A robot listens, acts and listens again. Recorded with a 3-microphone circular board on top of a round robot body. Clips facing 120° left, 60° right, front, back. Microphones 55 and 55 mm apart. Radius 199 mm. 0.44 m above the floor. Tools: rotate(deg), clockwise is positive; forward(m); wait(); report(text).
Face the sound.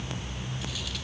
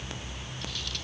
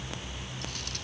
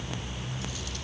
wait()
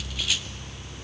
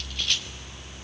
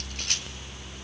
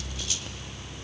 wait()
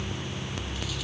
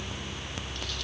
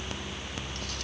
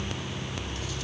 report("I can't make out anything.")